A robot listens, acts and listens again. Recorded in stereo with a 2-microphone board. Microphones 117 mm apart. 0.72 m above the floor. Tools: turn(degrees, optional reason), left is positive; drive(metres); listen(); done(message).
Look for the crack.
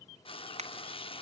turn(degrees=-70, reason="The crack: about 70° right or 110° right.")
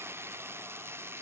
listen()
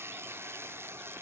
done("I heard a crack, but can't make it out now. It was about straight ahead or 40° right.")